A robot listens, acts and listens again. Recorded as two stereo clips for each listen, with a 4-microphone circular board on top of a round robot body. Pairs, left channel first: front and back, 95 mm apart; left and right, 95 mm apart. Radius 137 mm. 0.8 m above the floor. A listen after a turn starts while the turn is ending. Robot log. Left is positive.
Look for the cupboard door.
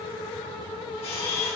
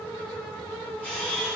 cmd idle
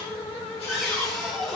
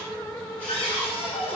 note: The cupboard door: 90° left.
cmd yaw +90
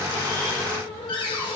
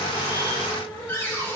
note: The cupboard door is now 25° left.
cmd yaw +25
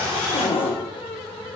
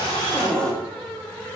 note: The cupboard door is now 10° left.
cmd yaw +10
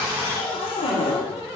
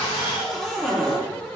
end: Facing the cupboard door.